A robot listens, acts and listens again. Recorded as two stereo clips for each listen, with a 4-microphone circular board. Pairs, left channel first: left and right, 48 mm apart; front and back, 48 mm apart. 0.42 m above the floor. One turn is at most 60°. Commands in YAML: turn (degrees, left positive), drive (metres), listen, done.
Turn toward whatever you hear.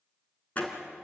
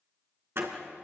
turn: 60
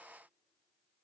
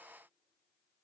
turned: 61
turn: 60
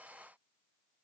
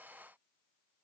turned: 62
turn: 25
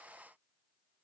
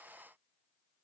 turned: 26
done: "Facing where the door slam came from. I can't hear it now."